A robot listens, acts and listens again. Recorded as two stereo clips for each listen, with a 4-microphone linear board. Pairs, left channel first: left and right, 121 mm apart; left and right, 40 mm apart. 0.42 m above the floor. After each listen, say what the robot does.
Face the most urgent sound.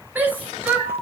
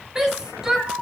Turn 15° right.
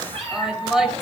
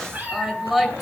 Found it: a shout, straight ahead.